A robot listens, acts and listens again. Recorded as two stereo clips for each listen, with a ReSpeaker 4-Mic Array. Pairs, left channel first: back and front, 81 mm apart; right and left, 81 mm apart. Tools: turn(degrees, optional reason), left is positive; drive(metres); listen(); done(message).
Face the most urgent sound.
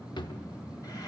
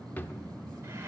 listen()
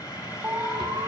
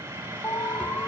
turn(degrees=-45, reason="The alarm: 45° right.")
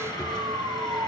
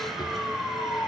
turn(degrees=-20, reason="The alarm is now 20° right.")
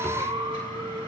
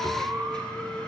done("Found it: an alarm, straight ahead.")